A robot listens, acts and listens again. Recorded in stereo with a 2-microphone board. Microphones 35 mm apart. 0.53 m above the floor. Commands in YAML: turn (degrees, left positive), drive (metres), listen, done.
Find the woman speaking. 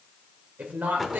turn: -60
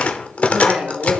turn: -50
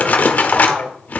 turn: -50
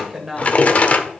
turn: -15
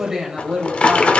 turn: -15
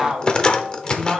done: "Found it: a woman speaking, straight ahead."